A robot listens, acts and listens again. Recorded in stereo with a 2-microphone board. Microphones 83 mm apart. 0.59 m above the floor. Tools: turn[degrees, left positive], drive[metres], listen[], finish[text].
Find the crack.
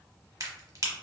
Thought: The crack: about 45° right or 135° right.
Action: turn[-45]
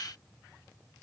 Action: listen[]
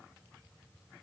Action: finish[I heard a crack, but can't make it out now. It was about straight ahead or 90° right.]